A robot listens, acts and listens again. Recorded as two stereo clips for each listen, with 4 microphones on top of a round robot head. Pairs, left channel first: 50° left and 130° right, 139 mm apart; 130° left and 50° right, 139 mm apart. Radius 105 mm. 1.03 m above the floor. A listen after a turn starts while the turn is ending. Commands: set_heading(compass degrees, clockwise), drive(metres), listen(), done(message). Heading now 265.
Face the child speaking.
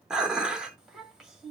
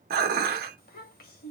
set_heading(120)
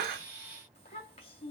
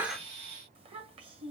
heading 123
done("Facing the child speaking, 1 to 2 m away.")